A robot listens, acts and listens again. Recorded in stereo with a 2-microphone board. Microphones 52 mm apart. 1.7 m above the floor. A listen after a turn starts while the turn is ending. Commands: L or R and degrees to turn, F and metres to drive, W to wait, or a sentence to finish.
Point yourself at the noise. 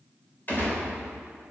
L35
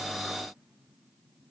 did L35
W
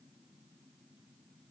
I heard a gunshot, but can't make it out now. It was about straight ahead or 110° left.